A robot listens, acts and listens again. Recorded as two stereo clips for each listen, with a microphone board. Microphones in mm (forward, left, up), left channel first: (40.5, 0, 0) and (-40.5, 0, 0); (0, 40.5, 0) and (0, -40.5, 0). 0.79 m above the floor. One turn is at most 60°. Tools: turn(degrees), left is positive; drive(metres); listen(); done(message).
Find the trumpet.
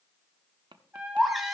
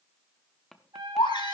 turn(degrees=-60)
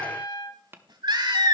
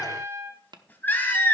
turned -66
turn(degrees=-40)
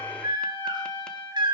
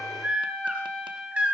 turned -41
done("Facing the trumpet.")